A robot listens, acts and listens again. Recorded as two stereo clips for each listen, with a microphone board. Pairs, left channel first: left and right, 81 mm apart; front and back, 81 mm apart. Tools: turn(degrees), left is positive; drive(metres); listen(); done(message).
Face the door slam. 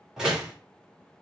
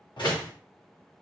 turn(degrees=-10)
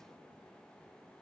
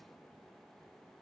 done("Facing where the door slam came from. I can't hear it now.")